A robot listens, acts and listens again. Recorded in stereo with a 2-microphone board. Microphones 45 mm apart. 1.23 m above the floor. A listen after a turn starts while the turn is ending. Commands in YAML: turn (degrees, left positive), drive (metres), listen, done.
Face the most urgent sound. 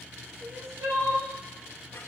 turn: -90
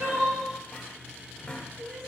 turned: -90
done: "Found it: crying, straight ahead, 1 to 2 m away."